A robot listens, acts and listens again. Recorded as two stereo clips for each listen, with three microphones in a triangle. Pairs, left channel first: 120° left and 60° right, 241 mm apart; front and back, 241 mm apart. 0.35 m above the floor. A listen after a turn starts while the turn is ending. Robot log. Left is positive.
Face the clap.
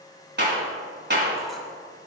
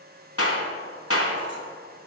note: The clap: 15° right.
cmd yaw -15
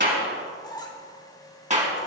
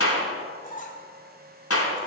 end: Found it: a clap, straight ahead, 2 to 4 m away.